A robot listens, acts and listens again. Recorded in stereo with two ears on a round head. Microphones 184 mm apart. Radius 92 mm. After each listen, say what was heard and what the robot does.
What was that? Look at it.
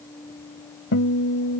The guitar: about 65° left or 115° left. Turn 65° left.
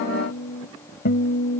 So it is at 45° left. Turn 45° left.
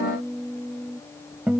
Found it: a guitar, straight ahead.